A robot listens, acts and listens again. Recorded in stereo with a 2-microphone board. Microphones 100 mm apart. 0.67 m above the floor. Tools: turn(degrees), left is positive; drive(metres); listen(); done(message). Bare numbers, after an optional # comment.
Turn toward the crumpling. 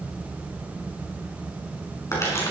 # The crumpling: about 30° left or 150° left.
turn(30)
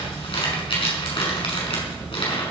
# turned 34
# So it is at 120° left.
turn(120)
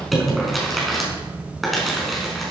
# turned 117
done("Facing the crumpling, over 4 m away.")